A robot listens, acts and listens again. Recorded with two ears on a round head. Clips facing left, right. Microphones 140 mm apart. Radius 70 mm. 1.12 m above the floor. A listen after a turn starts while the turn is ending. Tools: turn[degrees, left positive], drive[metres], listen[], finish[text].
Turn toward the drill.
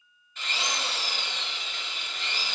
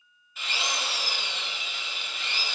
Action: turn[-30]
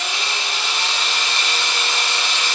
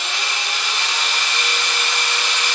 Thought: So it is at 25° left.
Action: turn[25]
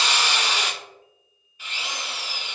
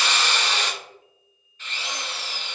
Thought: The drill is now 10° left.
Action: turn[10]
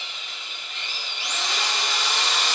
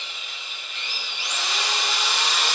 Action: finish[Found it: a drill, straight ahead.]